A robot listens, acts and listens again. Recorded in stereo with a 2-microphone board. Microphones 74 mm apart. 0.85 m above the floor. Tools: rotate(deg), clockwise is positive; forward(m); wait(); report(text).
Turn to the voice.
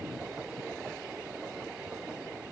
wait()
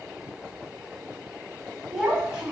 rotate(30)
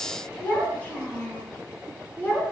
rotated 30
rotate(-25)
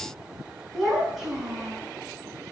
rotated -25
rotate(10)
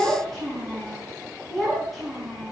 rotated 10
report("Found it: a child speaking, straight ahead, over 4 m away.")